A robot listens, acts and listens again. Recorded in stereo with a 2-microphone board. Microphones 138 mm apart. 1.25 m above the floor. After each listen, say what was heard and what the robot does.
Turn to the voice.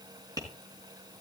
Keep listening.
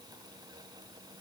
Keep listening.
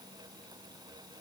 I can't make out anyone speaking to turn to.